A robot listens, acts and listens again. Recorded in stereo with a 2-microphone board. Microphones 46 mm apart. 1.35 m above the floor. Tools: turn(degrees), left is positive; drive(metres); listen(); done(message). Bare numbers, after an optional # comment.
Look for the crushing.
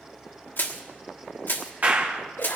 # The crushing: about 55° left or 125° left.
turn(55)
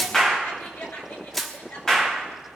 # So it is at 10° left.
turn(10)
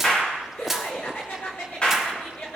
done("Found it: crushing, straight ahead.")